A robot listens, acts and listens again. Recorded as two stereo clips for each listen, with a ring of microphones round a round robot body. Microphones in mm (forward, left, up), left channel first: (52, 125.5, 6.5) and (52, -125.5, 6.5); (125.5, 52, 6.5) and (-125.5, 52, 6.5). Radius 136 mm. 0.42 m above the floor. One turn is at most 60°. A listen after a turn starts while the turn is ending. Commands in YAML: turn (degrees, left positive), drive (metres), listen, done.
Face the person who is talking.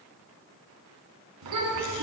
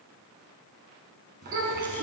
turn: -60
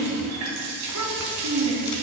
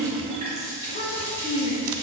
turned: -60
turn: -60
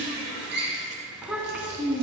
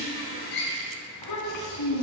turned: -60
done: "Found it: a child speaking, straight ahead, 2 to 4 m away."